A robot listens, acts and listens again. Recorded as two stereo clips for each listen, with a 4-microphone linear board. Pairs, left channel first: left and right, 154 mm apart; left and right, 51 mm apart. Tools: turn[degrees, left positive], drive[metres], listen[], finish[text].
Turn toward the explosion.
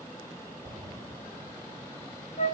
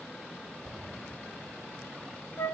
Thought: The explosion: about 20° right or 160° right.
Action: turn[-20]
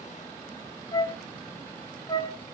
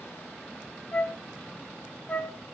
Action: listen[]
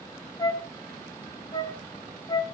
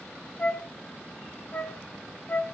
Action: finish[I heard an explosion, but can't make it out now. It was about straight ahead or 140° right.]